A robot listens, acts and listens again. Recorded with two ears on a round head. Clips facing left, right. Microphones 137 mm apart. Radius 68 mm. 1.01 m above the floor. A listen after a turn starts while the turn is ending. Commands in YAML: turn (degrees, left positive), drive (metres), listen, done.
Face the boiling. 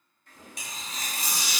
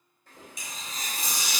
turn: -90
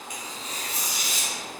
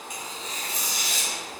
turn: 15
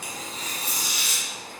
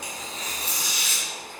done: "Found it: boiling, straight ahead, 1 to 2 m away."